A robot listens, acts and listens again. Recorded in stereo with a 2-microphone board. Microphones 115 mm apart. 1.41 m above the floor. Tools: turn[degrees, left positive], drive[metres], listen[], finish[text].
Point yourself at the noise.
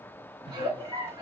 Thought: The giggle: about 45° right or 135° right.
Action: turn[-45]
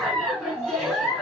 Action: finish[Found it: a giggle, straight ahead.]